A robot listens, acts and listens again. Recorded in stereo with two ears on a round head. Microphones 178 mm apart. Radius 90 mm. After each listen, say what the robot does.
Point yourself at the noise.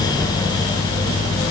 Turn 30° left.
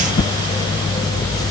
Turn 145° left.
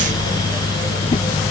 Turn 30° left.
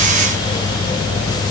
Keep listening.
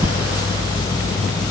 Turn 20° right.
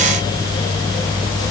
Keep listening.
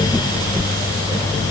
Facing the whoosh.